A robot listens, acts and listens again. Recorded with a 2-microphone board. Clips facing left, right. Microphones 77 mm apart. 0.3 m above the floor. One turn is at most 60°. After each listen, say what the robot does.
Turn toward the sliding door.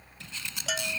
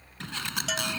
Turn 60° right.
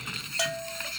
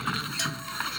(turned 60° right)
Turn 60° right.
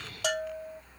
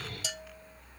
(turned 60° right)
Keep listening.
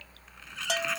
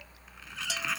Found it: a sliding door, straight ahead.